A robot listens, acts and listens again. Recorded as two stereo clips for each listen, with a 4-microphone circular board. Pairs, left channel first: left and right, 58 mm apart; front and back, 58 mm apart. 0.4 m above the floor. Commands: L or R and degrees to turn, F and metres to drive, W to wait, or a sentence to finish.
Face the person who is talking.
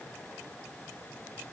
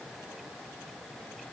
W
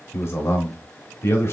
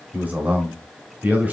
L120
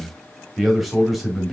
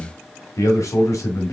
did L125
Facing the man speaking.